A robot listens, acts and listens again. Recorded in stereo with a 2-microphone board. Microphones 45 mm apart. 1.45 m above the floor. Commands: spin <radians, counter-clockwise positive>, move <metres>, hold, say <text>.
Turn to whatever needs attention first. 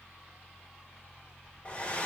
hold
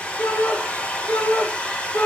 spin 1.13
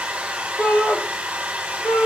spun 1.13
spin 0.87
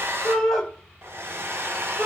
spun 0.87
spin 0.26
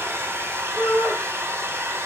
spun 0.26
say Facing the shout, 2 to 4 m away.